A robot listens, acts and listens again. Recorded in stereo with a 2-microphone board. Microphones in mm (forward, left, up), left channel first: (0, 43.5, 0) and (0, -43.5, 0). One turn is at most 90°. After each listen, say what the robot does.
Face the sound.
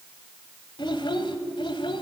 Turn 90° left.
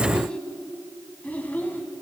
Turn 20° left.
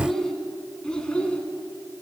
Turn 10° left.
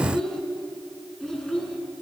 Facing the child speaking, 2 to 4 m away.